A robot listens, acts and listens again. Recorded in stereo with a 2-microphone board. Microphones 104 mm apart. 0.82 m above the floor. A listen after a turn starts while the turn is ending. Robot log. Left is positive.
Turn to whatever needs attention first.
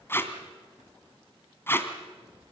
cmd idle
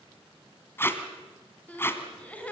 cmd yaw +30
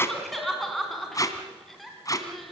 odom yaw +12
end: Found it: crying, straight ahead.